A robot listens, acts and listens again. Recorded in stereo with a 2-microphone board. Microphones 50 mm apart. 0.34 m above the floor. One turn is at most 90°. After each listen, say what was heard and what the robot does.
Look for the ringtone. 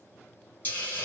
Keep listening.
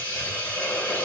Keep listening.
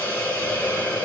I can't make out a ringtone to turn to.